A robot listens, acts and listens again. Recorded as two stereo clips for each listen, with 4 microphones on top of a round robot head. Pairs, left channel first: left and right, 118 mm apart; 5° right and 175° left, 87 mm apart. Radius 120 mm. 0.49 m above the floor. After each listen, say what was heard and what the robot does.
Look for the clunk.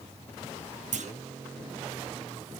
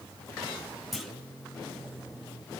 The clunk: 95° right. Turn 95° right.
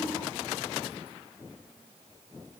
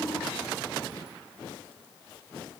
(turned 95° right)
I heard a clunk from this way, but can't make it out now.